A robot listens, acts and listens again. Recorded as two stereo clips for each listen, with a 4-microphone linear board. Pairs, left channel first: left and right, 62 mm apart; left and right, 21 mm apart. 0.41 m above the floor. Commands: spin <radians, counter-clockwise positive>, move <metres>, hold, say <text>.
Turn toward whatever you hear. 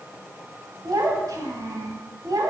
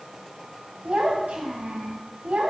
spin -1.22
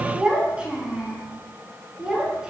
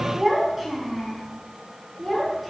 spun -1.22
spin -0.17
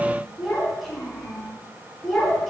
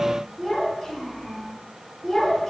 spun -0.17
say Facing the child speaking.